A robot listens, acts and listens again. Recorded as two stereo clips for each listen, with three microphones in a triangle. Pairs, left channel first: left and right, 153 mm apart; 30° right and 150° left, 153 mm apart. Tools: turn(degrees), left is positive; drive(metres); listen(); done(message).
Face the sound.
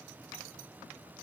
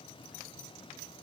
listen()
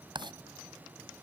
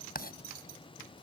turn(degrees=-30)
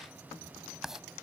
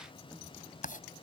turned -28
done("Found it: writing, straight ahead.")